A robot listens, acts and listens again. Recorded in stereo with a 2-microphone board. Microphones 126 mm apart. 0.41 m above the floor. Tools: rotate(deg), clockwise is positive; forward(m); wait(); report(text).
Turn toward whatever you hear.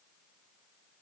wait()
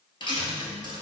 rotate(-40)
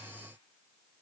wait()
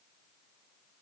report("I heard a dropped coin, but can't make it out now. It was about straight ahead or 100° left.")